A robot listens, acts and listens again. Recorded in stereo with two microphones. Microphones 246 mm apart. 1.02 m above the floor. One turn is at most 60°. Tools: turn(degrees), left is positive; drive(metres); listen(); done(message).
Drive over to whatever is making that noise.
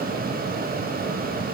listen()
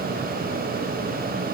listen()
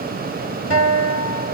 turn(degrees=60)
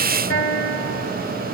turn(degrees=55)
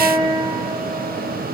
drive(metres=1.0)
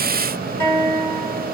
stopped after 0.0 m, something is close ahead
done("Something is in my way. I am facing the guitar but have not reached it.")